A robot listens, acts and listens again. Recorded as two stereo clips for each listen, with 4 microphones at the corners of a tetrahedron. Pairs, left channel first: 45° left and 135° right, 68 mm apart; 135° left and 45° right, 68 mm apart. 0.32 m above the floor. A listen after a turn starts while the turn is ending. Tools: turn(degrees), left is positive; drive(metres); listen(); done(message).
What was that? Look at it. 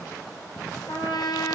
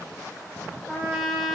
turn(degrees=50)
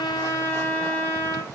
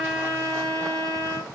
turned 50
turn(degrees=-15)
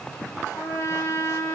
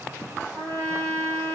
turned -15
done("Found it: a trumpet, straight ahead, 2 to 4 m away.")